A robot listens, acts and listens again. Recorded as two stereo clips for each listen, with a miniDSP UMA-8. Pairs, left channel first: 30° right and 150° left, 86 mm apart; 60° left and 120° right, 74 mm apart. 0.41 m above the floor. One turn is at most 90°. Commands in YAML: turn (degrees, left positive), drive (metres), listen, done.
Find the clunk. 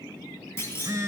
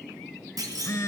turn: -90
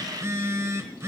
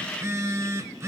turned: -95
done: "Facing where the clunk came from. I can't hear it now."